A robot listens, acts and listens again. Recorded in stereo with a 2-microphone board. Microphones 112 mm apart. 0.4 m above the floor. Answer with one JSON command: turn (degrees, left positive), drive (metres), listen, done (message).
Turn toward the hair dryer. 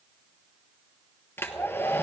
{"turn": 20}
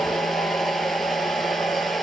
{"done": "Facing the hair dryer, 1 to 2 m away."}